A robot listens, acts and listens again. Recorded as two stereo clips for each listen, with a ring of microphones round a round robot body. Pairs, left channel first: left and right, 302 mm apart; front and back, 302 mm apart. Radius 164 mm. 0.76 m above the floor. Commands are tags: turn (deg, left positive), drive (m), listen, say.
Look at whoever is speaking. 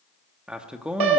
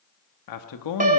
<say>Found it: a man speaking, straight ahead, 1 to 2 m away.</say>